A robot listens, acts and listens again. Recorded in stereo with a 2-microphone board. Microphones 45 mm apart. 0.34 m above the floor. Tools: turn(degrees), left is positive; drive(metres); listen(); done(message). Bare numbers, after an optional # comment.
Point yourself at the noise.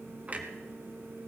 # The clunk: about 35° right or 145° right.
turn(-35)
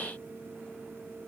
listen()
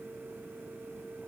done("I heard a clunk, but can't make it out now. It was about straight ahead or 110° right.")